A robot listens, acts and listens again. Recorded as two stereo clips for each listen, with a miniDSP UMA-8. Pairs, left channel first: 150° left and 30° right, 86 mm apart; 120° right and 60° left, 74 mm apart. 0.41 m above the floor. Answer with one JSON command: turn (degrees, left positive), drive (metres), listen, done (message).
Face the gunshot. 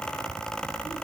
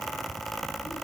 {"listen": true}
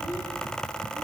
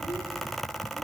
{"listen": true}
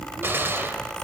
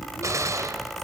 {"turn": 30}
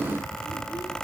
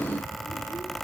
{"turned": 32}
{"done": "I heard a gunshot from this way, but can't make it out now."}